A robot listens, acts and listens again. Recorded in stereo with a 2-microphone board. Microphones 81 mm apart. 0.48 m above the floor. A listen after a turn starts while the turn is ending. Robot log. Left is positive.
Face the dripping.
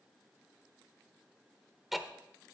cmd idle
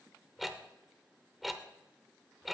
cmd idle
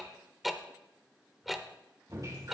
note: The dripping: about 45° right or 135° right.
cmd yaw -45
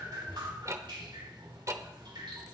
note: So it is at 85° right.
cmd yaw -85
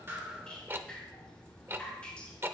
note: The dripping is now 15° left.
cmd yaw +15
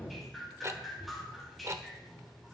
end: Facing the dripping.